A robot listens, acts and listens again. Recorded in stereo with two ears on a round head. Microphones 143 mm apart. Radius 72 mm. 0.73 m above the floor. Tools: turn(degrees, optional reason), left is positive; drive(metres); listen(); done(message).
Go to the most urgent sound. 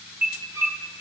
turn(degrees=-30)
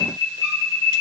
turn(degrees=20, reason="So it is at 20° left.")
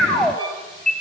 drive(metres=1.0)
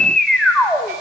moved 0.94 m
drive(metres=1.0)
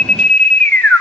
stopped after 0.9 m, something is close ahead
turn(degrees=10, reason="The alarm is now 10° left.")
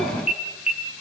done("Arrived at the alarm, straight ahead.")